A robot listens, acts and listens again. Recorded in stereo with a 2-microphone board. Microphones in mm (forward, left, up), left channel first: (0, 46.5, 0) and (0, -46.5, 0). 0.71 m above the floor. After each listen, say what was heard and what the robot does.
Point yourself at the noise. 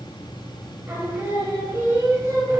The singing: about 40° right or 140° right. Turn 40° right.
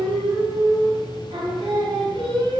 So it is at 100° right. Turn 100° right.
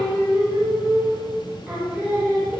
The singing is now 15° right. Turn 15° right.
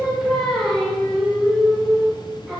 Found it: singing, straight ahead, over 4 m away.